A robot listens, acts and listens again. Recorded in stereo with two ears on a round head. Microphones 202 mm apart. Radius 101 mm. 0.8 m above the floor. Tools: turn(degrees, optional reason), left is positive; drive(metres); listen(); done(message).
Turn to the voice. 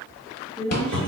turn(degrees=30)
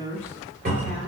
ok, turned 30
turn(degrees=145, reason="So it is at 145° left.")
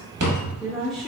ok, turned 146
done("Facing the woman speaking, 1 to 2 m away.")